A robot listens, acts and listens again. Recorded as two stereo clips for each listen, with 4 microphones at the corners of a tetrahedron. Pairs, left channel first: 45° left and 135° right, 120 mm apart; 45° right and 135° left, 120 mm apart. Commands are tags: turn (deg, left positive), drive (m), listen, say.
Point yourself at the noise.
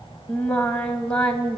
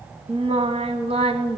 <turn deg="125"/>
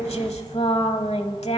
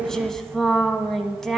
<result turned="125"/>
<turn deg="40"/>
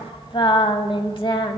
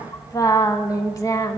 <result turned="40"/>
<turn deg="10"/>
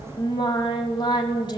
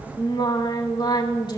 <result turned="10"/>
<say>Found it: singing, straight ahead.</say>